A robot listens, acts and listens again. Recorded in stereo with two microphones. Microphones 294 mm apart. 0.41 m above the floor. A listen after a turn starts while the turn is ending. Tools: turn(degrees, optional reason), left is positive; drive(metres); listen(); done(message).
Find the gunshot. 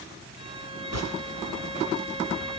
turn(degrees=-65, reason="The gunshot: about 65° right or 115° right.")
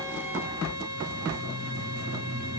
listen()
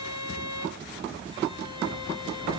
done("I heard a gunshot, but can't make it out now. It was about straight ahead or 50° right.")